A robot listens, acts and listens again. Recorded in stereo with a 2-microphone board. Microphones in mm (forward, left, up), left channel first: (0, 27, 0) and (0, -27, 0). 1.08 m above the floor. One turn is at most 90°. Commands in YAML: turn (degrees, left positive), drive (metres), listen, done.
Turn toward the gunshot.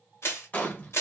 turn: 35
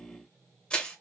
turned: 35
listen: true
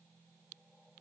done: "I heard a gunshot, but can't make it out now. It was about straight ahead or 110° left."